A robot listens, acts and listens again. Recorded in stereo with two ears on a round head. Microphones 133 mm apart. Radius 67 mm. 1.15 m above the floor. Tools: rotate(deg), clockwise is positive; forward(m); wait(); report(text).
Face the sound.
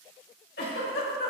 rotate(-70)
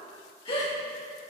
rotate(-35)
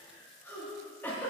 rotate(-15)
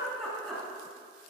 report("Facing the giggle, 2 to 4 m away.")